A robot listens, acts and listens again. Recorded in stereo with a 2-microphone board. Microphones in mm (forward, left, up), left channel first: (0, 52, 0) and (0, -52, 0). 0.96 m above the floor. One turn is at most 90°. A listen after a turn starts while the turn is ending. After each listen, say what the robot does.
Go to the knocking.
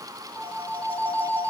Keep listening.
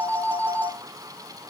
Keep listening.
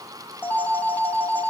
I can't make out knocking to turn to.